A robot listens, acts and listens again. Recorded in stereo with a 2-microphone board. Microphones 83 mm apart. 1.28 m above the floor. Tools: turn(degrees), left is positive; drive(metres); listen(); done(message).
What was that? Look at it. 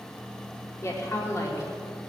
turn(degrees=35)
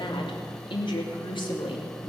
turn(degrees=105)
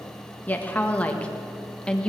turn(degrees=15)
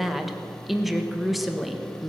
done("Facing the woman speaking.")